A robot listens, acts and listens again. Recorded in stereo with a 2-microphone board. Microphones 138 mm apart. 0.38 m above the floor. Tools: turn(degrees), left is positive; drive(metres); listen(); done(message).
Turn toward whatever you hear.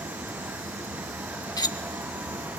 turn(degrees=30)
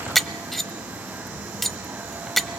done("Found it: cutlery clinking, straight ahead, under 1 m away.")